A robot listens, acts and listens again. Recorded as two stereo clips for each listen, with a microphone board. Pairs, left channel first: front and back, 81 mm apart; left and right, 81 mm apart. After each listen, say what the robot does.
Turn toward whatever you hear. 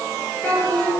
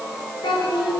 Turn 70° left.
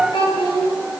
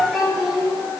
Found it: a child speaking, straight ahead, over 4 m away.